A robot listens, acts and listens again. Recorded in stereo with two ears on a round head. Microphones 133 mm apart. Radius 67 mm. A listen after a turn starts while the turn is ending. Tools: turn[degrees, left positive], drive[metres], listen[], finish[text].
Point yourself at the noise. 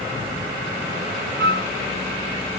Action: turn[-90]
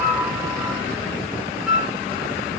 Action: finish[Facing the flute, 1 to 2 m away.]